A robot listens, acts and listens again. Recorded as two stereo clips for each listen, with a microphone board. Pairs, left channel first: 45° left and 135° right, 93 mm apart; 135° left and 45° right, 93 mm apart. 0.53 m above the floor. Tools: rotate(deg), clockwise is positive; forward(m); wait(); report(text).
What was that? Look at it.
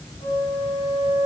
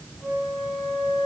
rotate(-40)
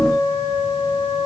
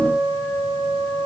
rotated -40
report("Found it: a flute, straight ahead, 2 to 4 m away.")